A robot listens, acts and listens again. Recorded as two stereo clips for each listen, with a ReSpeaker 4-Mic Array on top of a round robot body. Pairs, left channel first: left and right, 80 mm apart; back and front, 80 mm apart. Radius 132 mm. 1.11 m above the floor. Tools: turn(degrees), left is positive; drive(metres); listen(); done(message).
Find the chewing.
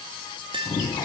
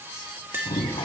turn(degrees=145)
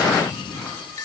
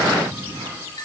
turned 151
done("Facing the chewing.")